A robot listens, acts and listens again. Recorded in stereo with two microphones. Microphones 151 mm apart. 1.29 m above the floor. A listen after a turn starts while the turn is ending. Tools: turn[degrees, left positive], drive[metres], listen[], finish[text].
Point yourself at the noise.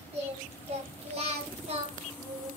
Thought: The singing: about 40° right or 140° right.
Action: turn[-40]
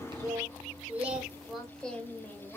Thought: So it is at 15° left.
Action: turn[15]
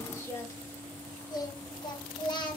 Thought: The singing is now 35° left.
Action: turn[35]
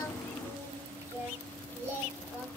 Thought: The singing is now 15° right.
Action: turn[-15]
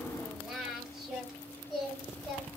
Action: finish[Found it: singing, straight ahead, 1 to 2 m away.]